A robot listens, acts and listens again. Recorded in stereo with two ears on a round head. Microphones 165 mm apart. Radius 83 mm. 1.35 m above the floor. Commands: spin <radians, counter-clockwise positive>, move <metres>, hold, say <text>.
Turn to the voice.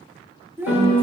spin -0.52
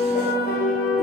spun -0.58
hold
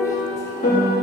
hold
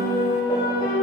say I heard a child speaking, but can't make it out now. It was about 20° left or 135° right.